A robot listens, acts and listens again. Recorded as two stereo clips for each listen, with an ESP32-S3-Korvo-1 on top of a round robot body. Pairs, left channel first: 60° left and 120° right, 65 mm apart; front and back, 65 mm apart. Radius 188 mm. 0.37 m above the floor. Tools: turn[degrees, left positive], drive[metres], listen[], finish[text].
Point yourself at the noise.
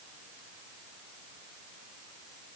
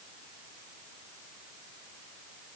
Action: listen[]
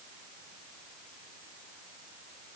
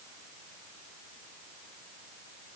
Action: listen[]
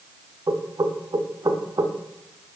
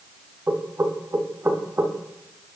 Thought: The knocking: 130° right.
Action: turn[-130]
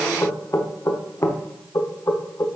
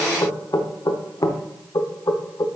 Thought: The knocking is now 20° left.
Action: turn[20]
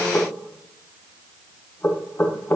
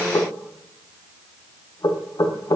Action: finish[Found it: knocking, straight ahead, under 1 m away.]